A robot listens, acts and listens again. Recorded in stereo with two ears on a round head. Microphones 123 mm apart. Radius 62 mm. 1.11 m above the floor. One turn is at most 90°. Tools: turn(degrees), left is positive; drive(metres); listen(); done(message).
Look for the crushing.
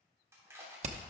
turn(degrees=-20)
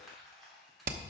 done("Facing the crushing.")